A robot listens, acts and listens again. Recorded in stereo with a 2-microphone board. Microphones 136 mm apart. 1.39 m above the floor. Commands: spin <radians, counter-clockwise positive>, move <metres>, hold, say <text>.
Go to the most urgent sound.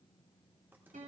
hold
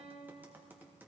hold
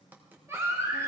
spin -0.35
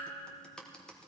hold
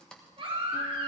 spin -2.44
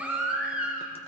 spin -0.17
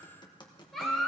move 1.0
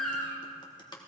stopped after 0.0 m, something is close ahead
say Something is in my way. I am facing the baby crying but have not reached it.